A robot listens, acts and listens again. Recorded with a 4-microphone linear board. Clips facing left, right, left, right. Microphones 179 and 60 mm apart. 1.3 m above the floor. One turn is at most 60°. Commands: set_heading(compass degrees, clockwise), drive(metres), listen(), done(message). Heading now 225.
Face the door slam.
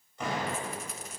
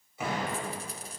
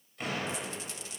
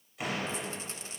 set_heading(255)
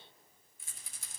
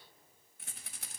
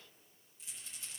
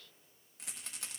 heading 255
listen()
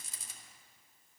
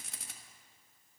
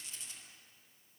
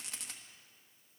done("I heard a door slam, but can't make it out now. It was about 25° left or 145° right.")